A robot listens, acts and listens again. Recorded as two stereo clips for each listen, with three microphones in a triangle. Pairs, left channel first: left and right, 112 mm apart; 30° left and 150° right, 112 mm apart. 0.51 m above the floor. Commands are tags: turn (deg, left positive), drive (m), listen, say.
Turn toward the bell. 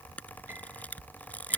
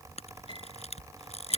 <listen/>
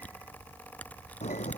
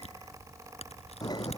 <turn deg="85"/>
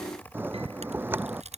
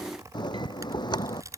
<turn deg="-20"/>
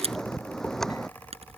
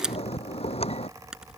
<say>Found it: a bell, straight ahead.</say>